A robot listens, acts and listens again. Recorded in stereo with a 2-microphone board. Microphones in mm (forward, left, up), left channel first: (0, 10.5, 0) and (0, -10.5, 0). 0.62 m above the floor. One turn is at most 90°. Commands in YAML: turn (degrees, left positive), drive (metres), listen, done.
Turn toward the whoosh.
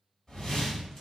turn: 25
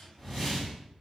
done: "Facing the whoosh, 1 to 2 m away."